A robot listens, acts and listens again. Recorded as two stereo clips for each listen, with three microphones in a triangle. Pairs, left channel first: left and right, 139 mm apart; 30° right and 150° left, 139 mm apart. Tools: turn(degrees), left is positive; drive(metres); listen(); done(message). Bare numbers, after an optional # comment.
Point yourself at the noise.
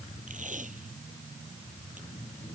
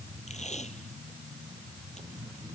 # The tape being pulled: 65° right.
turn(-65)
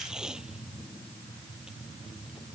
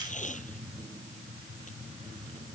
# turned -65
done("Found it: tape being pulled, straight ahead.")